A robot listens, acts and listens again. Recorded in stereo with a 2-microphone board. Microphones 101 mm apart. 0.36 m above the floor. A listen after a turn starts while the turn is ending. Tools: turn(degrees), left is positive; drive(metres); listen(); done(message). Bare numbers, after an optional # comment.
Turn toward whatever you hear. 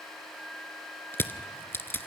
# The crushing: about 20° left or 160° left.
turn(20)
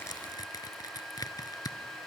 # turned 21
# So it is at 140° left.
turn(140)
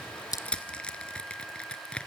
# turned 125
# The crushing is now 10° left.
turn(10)
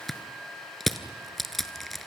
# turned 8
done("Found it: crushing, straight ahead, 1 to 2 m away.")